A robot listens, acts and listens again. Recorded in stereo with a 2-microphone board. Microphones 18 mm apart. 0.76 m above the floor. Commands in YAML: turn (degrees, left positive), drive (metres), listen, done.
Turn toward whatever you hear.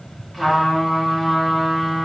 turn: 30
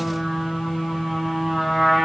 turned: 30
turn: -25
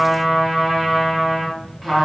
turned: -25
done: "Facing the trumpet, 1 to 2 m away."